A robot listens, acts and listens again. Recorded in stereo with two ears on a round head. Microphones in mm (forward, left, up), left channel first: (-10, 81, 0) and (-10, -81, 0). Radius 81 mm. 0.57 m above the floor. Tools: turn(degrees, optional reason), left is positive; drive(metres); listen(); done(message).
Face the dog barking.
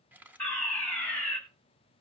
listen()
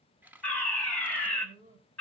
turn(degrees=-45, reason="The dog barking: about 45° right or 135° right.")
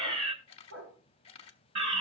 turn(degrees=-85, reason="So it is at 85° right.")
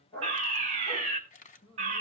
turn(degrees=20, reason="The dog barking is now 20° left.")
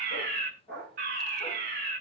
done("Facing the dog barking.")